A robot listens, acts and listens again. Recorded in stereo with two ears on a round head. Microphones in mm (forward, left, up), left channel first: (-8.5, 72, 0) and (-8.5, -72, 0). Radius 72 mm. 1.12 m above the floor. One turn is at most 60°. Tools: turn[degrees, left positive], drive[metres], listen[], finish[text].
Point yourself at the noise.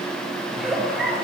Action: turn[30]
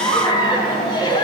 Thought: So it is at 150° left.
Action: turn[60]
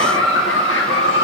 Thought: The giggle is now 90° left.
Action: turn[60]
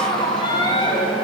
Thought: The giggle is now 25° left.
Action: turn[25]
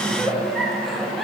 Action: finish[Facing the giggle.]